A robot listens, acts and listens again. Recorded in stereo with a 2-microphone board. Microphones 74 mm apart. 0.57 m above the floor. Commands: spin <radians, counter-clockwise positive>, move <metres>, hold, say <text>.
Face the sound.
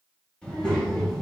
spin 0.52
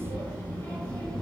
spin 0.52
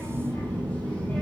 spin 2.79
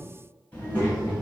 spin 0.44
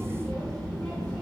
say Found it: a child speaking, straight ahead.